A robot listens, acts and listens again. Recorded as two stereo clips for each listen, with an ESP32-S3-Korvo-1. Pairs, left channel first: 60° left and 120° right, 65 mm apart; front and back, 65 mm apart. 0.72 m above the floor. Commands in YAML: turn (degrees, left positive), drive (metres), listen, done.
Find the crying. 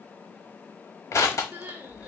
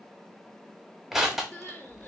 turn: -60
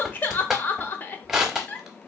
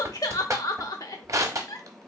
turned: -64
done: "Facing the crying, under 1 m away."